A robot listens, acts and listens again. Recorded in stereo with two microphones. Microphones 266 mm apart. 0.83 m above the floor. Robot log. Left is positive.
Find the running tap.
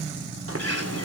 note: The running tap: about 60° right or 120° right.
cmd yaw -60
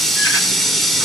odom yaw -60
end: Found it: a running tap, straight ahead, 1 to 2 m away.